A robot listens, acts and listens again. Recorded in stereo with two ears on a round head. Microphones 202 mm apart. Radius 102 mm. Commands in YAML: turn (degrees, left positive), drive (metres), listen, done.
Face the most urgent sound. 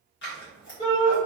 turn: 20
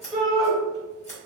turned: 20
done: "Found it: a shout, straight ahead."